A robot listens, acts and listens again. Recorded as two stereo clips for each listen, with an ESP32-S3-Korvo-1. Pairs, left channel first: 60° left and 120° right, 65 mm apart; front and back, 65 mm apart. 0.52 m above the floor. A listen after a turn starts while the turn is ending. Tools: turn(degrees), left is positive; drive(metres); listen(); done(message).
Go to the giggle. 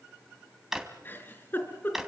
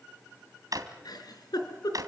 drive(metres=1.0)
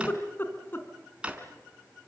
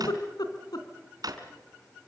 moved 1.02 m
drive(metres=1.0)
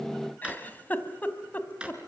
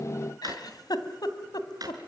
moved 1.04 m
drive(metres=1.0)
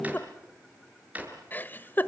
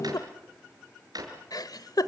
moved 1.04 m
drive(metres=1.0)
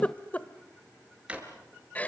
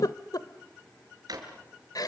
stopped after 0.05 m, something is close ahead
done("Arrived at the giggle, straight ahead.")